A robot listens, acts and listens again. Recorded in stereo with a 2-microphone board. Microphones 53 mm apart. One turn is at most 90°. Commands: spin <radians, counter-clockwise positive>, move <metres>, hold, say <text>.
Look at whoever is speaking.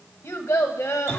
spin 1.22
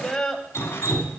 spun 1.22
spin 0.17
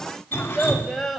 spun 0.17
say Found it: a child speaking, straight ahead, 1 to 2 m away.